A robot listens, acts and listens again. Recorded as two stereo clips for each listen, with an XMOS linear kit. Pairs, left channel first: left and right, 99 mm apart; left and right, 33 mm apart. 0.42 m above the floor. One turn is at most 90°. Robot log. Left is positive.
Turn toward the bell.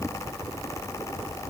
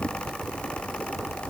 cmd idle
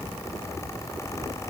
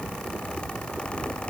cmd idle
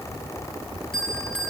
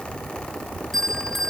cmd yaw +30
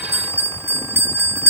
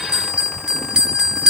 note: So it is at 25° right.
cmd yaw -25
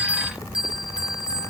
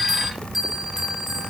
note: The bell is now 10° right.
cmd yaw -10
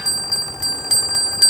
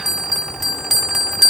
end: Facing the bell.